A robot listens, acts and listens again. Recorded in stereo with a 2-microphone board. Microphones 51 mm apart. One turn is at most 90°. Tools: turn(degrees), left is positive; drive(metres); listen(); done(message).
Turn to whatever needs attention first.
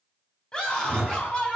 turn(degrees=20)
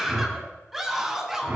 done("Facing the scream.")